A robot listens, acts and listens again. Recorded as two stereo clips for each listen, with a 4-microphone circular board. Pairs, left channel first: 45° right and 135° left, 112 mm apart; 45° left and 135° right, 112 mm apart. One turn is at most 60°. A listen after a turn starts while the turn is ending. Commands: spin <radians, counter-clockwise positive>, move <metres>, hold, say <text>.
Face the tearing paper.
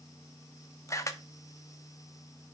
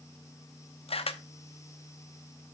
hold
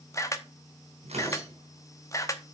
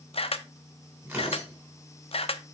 spin 1.05
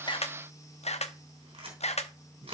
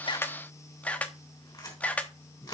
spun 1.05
spin 1.05
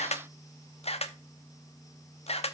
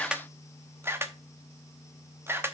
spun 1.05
spin 0.79
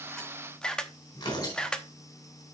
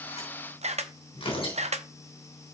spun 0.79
spin 0.17
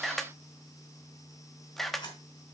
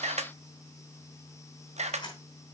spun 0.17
say Found it: tearing paper, straight ahead.